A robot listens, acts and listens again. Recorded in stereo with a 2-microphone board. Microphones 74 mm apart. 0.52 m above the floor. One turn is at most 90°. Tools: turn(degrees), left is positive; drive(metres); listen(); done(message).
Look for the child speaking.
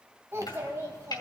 turn(degrees=-40)
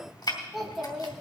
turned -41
done("Found it: a child speaking, straight ahead.")